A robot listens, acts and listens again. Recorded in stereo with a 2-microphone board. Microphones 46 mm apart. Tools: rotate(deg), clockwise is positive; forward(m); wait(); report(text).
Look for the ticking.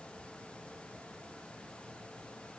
wait()
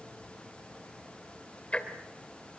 rotate(-25)
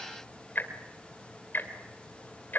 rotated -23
rotate(-130)
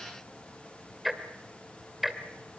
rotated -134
report("Facing the ticking.")